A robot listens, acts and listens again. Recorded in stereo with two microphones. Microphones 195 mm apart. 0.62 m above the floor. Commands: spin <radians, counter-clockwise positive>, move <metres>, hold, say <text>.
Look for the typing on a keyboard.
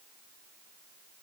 hold
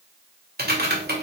spin -0.96
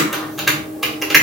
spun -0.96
say Found it: typing on a keyboard, straight ahead, 1 to 2 m away.